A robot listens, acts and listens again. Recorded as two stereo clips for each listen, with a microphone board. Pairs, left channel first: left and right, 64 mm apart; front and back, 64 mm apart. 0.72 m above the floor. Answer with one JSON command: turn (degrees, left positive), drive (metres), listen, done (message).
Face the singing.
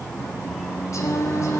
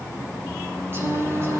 {"turn": 130}
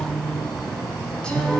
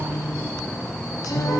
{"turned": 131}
{"turn": 15}
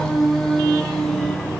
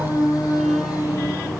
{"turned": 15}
{"done": "Facing the singing, over 4 m away."}